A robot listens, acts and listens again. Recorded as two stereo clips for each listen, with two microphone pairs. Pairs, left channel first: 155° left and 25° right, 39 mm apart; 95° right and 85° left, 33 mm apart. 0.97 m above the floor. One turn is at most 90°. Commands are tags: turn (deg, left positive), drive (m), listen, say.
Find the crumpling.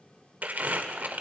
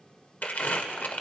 <turn deg="-65"/>
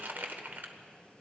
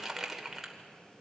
<say>Facing the crumpling.</say>